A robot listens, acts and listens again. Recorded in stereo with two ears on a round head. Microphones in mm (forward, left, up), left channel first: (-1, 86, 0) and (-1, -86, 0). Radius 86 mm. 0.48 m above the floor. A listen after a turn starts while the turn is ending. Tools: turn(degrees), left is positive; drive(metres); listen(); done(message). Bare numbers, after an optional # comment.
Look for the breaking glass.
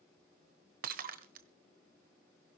# The breaking glass: about 50° right or 130° right.
turn(-50)
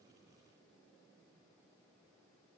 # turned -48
listen()
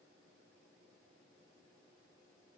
done("I heard breaking glass, but can't make it out now. It was about straight ahead or 85° right.")